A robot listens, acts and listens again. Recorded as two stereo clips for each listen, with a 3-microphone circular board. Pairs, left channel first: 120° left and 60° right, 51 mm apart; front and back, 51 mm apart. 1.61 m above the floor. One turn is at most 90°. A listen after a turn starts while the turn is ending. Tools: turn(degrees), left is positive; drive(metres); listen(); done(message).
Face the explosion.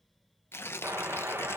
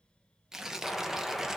turn(degrees=-85)
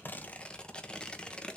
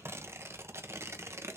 done("I heard an explosion from this way, but can't make it out now.")